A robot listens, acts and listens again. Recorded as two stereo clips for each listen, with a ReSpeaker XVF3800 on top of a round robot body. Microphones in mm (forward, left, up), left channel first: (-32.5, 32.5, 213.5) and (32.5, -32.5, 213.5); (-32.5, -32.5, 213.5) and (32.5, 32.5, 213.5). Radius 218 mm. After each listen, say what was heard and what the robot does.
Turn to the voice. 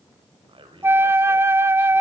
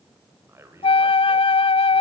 The man speaking: 20° right. Turn 20° right.
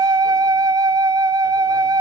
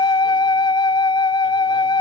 Keep listening.
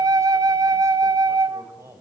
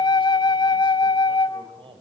The man speaking is now 15° left. Turn 15° left.
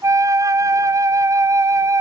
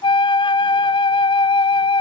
Keep listening.
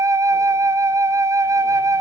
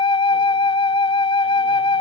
Keep listening.
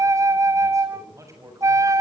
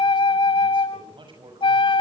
The man speaking is now 10° left. Turn 10° left.
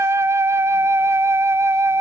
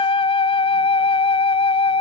Keep listening.
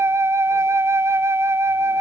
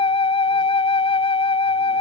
Keep listening.
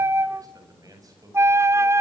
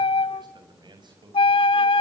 Facing the man speaking, over 4 m away.